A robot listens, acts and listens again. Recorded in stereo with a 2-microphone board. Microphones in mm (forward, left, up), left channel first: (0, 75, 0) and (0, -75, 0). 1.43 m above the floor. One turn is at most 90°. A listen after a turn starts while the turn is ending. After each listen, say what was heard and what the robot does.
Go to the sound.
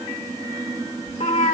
The cat meowing: about 55° left or 125° left. Turn 55° left.
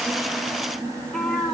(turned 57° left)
Drive 1.0 m forward.
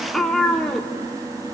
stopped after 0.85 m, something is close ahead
Arrived at the cat meowing, straight ahead.